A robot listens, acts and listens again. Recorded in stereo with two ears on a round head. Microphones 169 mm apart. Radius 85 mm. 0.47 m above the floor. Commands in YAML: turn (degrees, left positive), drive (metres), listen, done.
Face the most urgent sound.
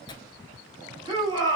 turn: -25
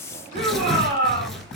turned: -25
turn: -125
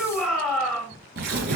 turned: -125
done: "Found it: a shout, straight ahead, 1 to 2 m away."